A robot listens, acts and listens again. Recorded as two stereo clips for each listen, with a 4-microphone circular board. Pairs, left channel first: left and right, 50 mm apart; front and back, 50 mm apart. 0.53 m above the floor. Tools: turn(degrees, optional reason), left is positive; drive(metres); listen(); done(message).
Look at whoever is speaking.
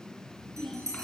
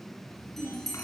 turn(degrees=15, reason="The child speaking: 15° left.")
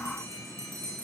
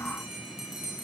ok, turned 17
listen()
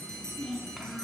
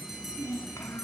done("Facing the child speaking, 2 to 4 m away.")